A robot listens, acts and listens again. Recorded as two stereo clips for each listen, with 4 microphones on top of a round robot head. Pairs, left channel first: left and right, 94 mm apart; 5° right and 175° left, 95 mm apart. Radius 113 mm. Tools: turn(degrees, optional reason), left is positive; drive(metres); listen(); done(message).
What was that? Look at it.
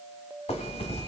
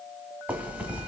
turn(degrees=100, reason="The zipper: 100° left.")
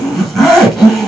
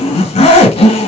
done("Found it: a zipper, straight ahead.")